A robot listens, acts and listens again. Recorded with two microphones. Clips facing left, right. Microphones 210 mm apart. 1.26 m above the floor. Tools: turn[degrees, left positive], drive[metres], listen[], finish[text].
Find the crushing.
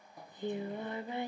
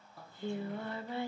Action: listen[]
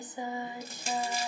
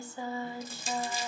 Thought: The crushing: about 70° left or 110° left.
Action: turn[70]
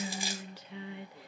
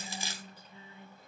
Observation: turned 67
Thought: So it is at 15° left.
Action: turn[15]
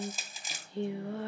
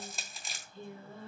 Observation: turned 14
Action: finish[Facing the crushing.]